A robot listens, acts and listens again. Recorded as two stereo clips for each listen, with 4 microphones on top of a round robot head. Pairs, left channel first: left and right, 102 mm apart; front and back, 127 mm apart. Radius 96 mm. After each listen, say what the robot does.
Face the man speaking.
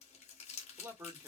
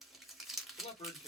Turn 25° right.
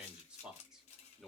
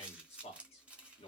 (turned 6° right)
Found it: a man speaking, straight ahead, 1 to 2 m away.